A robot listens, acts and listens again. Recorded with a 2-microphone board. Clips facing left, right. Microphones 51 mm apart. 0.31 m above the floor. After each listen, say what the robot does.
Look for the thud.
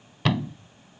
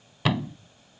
Turn 30° right.
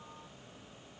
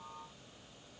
Keep listening.
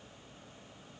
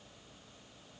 I heard a thud, but can't make it out now. It was about 25° left or 145° right.